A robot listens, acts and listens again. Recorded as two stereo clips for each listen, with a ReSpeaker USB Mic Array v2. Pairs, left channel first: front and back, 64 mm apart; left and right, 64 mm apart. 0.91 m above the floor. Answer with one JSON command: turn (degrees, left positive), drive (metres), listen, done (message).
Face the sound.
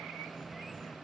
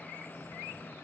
{"listen": true}
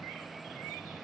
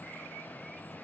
{"listen": true}
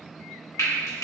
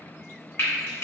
{"turn": 40}
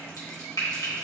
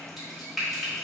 {"done": "Facing the frying."}